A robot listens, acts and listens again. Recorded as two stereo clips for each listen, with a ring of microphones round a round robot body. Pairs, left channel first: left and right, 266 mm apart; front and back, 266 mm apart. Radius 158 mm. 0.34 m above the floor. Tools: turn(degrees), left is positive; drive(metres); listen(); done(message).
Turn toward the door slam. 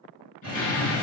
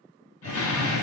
turn(degrees=30)
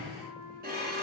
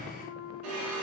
done("Facing where the door slam came from. I can't hear it now.")